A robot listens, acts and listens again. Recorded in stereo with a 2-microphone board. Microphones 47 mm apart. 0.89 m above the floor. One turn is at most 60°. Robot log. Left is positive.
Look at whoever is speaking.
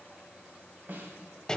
cmd idle
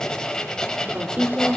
note: The woman speaking: about 35° right or 145° right.
cmd yaw -35
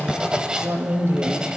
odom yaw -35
note: So it is at 115° right.
cmd yaw -60
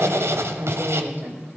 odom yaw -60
note: The woman speaking is now 60° right.
cmd yaw -60
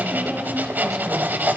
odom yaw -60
cmd idle
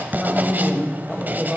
end: Facing the woman speaking, over 4 m away.